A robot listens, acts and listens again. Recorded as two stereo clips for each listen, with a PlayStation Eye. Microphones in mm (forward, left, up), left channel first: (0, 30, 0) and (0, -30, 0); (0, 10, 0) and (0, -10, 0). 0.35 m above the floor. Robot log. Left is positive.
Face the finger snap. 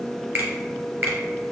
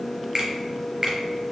note: The finger snap: about 35° right or 145° right.
cmd yaw -35
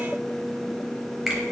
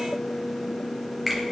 end: Found it: a finger snap, straight ahead.